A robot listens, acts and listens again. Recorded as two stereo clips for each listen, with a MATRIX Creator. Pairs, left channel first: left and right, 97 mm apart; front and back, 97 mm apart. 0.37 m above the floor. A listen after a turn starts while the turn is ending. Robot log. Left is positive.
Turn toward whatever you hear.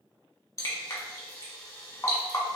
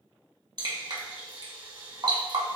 note: The dripping: 140° left.
cmd yaw +140
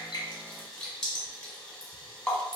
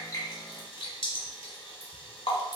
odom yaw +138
end: Found it: dripping, straight ahead.